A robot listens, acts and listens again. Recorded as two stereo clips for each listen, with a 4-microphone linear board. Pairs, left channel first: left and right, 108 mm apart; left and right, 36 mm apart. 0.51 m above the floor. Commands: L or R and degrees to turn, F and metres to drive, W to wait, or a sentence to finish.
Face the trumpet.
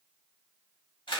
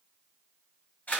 W
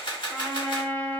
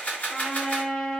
L20
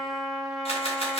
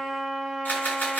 Found it: a trumpet, straight ahead, under 1 m away.